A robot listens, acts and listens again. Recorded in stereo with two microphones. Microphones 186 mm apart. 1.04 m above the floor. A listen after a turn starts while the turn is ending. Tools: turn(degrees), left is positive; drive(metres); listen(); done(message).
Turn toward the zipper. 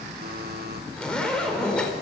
turn(degrees=30)
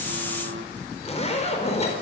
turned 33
turn(degrees=145)
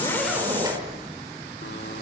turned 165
turn(degrees=-20)
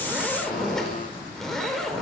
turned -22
done("Found it: a zipper, straight ahead, over 4 m away.")